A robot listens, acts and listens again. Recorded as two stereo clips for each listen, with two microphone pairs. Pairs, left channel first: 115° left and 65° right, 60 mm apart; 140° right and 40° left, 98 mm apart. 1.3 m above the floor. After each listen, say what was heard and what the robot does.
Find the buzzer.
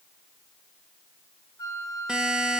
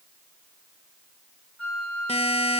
The buzzer: 140° right. Turn 140° right.
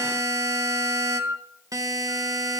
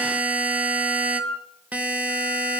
The buzzer is now 35° right. Turn 35° right.
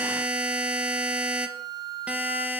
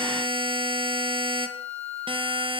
Found it: a buzzer, straight ahead.